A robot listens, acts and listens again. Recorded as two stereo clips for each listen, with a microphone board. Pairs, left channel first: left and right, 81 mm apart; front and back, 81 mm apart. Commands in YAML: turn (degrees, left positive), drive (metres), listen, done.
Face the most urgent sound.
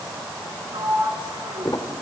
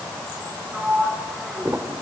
listen: true
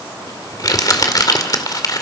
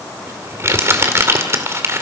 listen: true
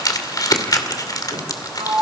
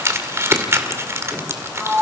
done: "I can't make out anything urgent, only crumpling and a sliding door."